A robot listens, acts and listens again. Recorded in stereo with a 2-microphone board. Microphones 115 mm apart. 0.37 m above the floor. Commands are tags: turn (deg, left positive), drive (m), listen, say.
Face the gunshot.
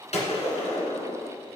<turn deg="90"/>
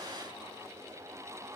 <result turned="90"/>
<say>I heard a gunshot from this way, but can't make it out now.</say>